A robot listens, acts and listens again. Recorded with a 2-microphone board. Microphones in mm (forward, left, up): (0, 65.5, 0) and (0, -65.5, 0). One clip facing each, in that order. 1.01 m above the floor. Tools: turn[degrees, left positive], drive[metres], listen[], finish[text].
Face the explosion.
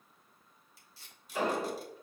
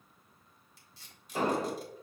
Thought: The explosion: about 35° right or 145° right.
Action: turn[-35]
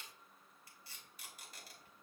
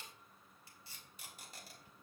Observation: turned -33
Action: listen[]
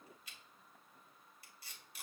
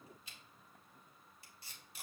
Action: finish[I heard an explosion, but can't make it out now. It was about straight ahead or 110° right.]